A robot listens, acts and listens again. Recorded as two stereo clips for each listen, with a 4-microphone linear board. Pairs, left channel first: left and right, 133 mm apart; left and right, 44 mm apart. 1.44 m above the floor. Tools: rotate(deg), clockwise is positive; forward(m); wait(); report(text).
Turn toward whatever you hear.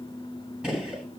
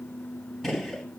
rotate(30)
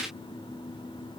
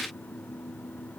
wait()
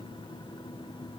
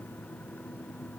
report("I heard a gunshot, but can't make it out now. It was about 25° left or 145° right.")